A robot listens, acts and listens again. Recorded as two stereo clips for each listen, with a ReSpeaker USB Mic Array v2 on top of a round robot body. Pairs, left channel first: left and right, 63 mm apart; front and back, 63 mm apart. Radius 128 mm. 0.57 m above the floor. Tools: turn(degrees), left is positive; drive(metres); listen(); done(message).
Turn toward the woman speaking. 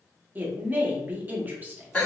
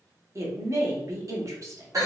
turn(degrees=-150)
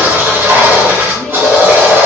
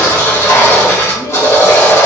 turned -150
listen()
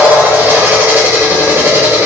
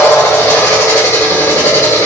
listen()
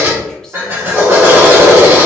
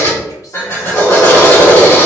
done("Facing where the woman speaking came from. I can't hear it now.")